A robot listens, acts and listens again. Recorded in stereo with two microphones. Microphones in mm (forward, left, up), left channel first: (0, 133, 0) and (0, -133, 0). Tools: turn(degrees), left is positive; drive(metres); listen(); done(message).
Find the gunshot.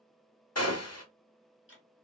turn(degrees=65)
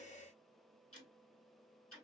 listen()
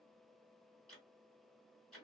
done("I heard a gunshot, but can't make it out now. It was about straight ahead or 50° left.")